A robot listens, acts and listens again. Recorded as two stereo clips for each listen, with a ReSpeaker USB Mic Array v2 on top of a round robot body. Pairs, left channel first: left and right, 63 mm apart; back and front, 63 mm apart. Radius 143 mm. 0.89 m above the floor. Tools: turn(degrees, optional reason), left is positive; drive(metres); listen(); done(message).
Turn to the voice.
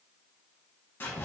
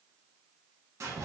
listen()
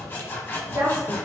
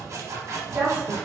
turn(degrees=-70, reason="The woman speaking: 70° right.")
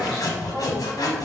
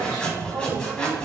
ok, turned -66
listen()
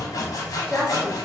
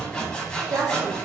done("Found it: a woman speaking, straight ahead, 1 to 2 m away.")